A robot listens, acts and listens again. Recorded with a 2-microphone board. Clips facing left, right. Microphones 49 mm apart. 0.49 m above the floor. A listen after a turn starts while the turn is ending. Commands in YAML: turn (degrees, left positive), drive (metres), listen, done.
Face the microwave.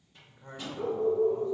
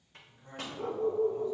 turn: -55
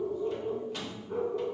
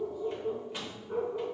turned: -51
turn: -15
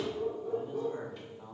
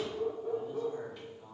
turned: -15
listen: true
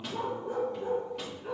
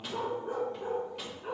listen: true
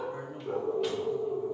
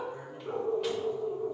done: "Facing where the microwave came from. I can't hear it now."